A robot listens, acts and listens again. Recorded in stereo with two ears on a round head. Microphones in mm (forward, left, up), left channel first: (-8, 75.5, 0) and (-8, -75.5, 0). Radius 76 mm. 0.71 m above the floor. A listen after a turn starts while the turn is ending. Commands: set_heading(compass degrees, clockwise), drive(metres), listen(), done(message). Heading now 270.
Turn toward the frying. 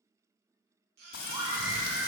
set_heading(200)
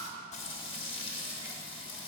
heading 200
set_heading(165)
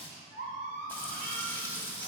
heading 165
set_heading(155)
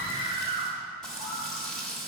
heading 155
done("Facing the frying, under 1 m away.")